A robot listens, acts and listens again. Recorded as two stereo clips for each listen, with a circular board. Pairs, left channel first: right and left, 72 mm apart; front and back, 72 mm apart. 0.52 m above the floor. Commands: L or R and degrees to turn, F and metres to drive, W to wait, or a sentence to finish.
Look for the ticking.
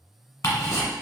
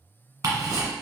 R135
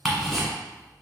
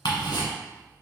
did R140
Found it: ticking, straight ahead, 1 to 2 m away.